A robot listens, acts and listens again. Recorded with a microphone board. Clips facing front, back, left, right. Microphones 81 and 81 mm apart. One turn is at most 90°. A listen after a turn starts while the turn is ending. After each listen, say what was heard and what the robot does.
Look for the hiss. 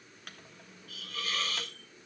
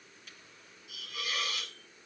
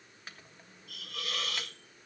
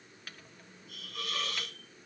The hiss: 100° left. Turn 90° left.
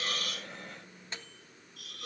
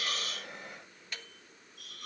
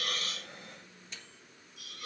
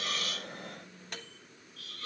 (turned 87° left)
The hiss is now 15° left. Turn 15° left.
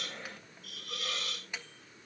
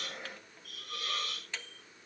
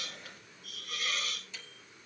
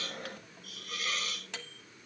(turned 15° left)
Facing the hiss.